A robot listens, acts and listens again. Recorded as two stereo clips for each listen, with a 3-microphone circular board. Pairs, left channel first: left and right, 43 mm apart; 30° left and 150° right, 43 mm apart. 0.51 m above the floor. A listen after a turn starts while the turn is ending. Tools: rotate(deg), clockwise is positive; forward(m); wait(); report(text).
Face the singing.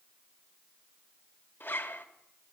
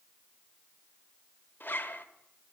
wait()
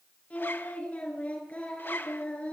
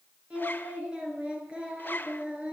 rotate(-145)
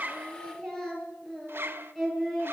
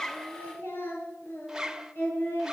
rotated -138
report("Facing the singing, over 4 m away.")